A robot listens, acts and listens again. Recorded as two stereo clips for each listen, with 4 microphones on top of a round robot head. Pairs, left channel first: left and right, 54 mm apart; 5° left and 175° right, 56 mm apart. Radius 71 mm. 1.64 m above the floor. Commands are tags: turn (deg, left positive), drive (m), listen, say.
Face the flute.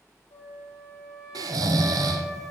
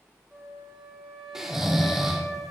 <turn deg="100"/>
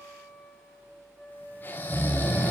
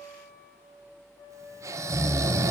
<turn deg="-15"/>
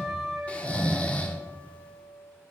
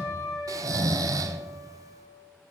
<say>Found it: a flute, straight ahead.</say>